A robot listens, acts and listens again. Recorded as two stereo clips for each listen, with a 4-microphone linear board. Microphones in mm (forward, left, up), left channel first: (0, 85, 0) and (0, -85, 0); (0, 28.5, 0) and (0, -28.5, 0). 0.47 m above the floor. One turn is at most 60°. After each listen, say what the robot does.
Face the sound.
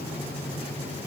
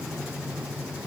Keep listening.
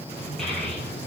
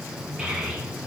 Turn 30° left.
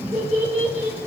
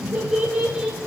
Turn 25° right.
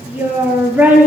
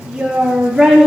Turn 10° right.
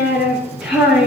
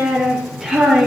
Found it: a child speaking, straight ahead, over 4 m away.